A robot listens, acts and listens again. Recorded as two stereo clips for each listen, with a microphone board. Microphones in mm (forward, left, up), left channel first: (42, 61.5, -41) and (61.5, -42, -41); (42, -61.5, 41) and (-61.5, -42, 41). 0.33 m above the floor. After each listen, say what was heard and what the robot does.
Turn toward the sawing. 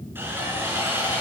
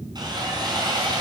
The sawing: 145° right. Turn 145° right.
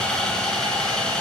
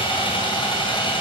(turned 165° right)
The sawing is now 20° left. Turn 20° left.
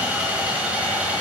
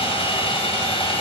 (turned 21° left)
Facing the sawing.